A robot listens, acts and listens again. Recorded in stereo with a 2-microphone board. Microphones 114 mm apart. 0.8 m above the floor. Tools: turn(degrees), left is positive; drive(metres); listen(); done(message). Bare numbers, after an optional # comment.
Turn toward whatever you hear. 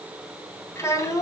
# The child speaking: about 30° left or 150° left.
turn(30)
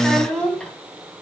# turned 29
# So it is at 10° left.
turn(10)
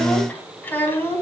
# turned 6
# The child speaking is now 20° left.
turn(20)
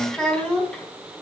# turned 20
# The child speaking is now 10° left.
turn(10)
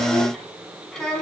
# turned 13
done("Found it: a child speaking, straight ahead, over 4 m away.")